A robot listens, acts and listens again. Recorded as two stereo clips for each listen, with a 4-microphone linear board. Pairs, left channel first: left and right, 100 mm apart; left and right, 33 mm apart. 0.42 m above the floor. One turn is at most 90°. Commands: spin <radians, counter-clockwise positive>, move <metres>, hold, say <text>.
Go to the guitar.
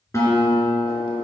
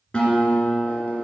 spin 0.52
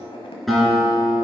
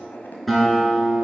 move 1.0
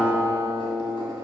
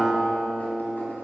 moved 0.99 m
move 1.0
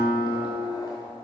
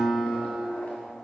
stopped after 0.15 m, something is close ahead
spin 0.26
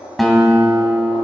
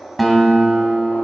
say Arrived at the guitar, straight ahead.